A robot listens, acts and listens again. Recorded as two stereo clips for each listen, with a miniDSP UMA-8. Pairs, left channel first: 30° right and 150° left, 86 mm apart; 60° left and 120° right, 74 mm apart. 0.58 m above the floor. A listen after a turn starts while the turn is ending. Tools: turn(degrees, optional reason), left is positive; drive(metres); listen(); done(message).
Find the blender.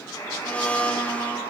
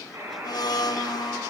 turn(degrees=45, reason="The blender: 45° left.")
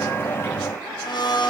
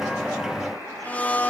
done("Found it: a blender, straight ahead, under 1 m away.")